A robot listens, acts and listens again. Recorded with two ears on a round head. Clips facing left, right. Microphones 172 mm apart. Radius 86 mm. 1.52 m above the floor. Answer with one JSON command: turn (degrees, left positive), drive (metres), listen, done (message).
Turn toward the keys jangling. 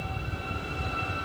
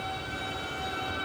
{"listen": true}
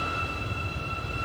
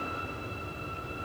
{"listen": true}
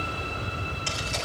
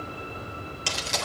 {"turn": -75}
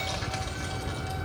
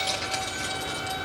{"listen": true}
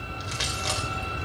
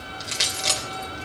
{"turn": -30}
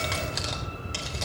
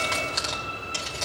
{"done": "Facing the keys jangling."}